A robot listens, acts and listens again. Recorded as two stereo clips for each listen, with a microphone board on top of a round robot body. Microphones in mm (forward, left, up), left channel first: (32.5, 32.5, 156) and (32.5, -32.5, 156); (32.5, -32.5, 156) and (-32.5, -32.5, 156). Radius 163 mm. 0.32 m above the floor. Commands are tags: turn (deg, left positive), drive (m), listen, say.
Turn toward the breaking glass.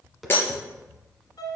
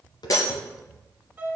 <turn deg="35"/>
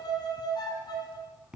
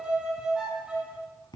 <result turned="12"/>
<turn deg="25"/>
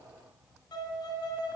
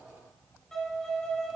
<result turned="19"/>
<say>I heard breaking glass from this way, but can't make it out now.</say>